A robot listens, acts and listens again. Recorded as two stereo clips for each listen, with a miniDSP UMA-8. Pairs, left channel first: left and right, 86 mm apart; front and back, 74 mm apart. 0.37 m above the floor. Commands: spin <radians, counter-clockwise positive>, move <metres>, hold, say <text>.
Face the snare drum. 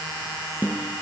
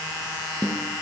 spin -2.79
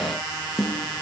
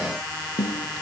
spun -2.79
say Found it: a snare drum, straight ahead.